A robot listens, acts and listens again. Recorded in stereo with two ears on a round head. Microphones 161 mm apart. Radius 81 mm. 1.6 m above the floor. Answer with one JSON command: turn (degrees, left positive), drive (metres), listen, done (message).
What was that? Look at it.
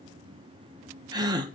{"turn": -20}
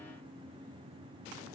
{"listen": true}
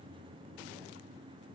{"done": "I heard a gasp, but can't make it out now. It was about straight ahead or 140° right."}